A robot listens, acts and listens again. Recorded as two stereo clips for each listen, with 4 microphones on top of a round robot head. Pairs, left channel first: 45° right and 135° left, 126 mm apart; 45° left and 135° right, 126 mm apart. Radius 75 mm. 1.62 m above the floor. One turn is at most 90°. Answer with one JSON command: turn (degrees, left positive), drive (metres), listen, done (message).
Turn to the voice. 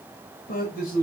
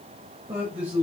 {"turn": -55}
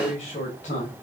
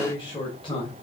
{"done": "Found it: a man speaking, straight ahead."}